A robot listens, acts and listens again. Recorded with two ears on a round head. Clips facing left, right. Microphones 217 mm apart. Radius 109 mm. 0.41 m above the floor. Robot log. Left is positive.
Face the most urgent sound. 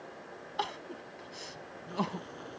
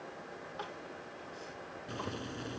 cmd yaw +90
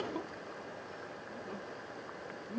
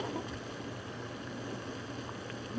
end: Found it: crying, straight ahead.